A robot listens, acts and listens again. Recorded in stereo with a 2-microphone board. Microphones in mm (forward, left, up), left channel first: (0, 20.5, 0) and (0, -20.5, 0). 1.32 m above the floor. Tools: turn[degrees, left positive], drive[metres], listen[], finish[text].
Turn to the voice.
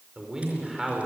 Action: turn[-30]
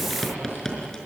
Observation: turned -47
Action: listen[]
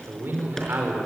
Thought: So it is at 120° right.
Action: turn[-120]
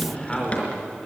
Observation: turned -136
Thought: The man speaking is now 15° left.
Action: turn[15]
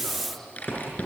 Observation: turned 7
Thought: The man speaking is now 10° left.
Action: turn[10]
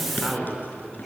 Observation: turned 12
Action: finish[Facing the man speaking, over 4 m away.]